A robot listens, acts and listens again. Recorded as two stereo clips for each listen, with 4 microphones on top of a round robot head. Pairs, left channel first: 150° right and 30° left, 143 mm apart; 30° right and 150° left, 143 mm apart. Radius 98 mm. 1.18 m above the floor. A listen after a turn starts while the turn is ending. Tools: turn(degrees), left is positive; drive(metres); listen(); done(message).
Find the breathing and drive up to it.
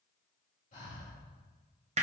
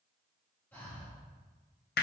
turn(degrees=-110)
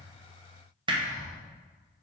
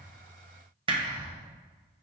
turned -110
drive(metres=1.0)
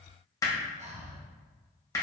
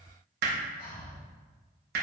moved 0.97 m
turn(degrees=-10)
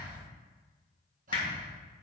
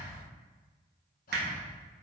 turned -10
drive(metres=1.0)
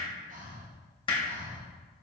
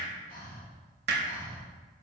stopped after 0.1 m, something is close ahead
done("Arrived at the breathing, straight ahead.")